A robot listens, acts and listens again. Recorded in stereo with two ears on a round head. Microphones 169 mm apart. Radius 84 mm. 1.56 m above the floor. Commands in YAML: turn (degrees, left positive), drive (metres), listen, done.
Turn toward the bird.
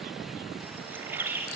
turn: -30
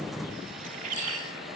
turn: -135
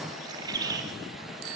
turn: -20
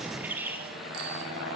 turn: -10
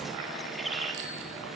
done: "Facing the bird."